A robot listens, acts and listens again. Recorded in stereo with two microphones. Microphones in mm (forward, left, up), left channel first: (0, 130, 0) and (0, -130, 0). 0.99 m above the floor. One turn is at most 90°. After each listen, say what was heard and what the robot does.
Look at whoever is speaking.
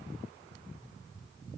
Keep listening.
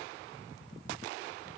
Keep listening.
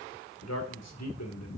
Turn 90° left.
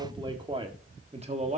So it is at 25° right. Turn 25° right.
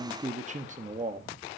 The man speaking is now 30° right. Turn 30° right.
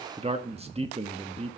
The man speaking is now 25° right. Turn 25° right.
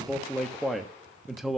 Found it: a man speaking, straight ahead, 1 to 2 m away.